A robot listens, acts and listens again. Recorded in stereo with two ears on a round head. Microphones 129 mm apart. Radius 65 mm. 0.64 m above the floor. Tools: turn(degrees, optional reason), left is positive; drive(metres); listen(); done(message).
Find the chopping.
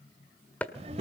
turn(degrees=30)
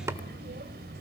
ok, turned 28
turn(degrees=-20, reason="So it is at 20° right.")
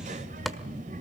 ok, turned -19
listen()
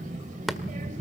done("Facing the chopping.")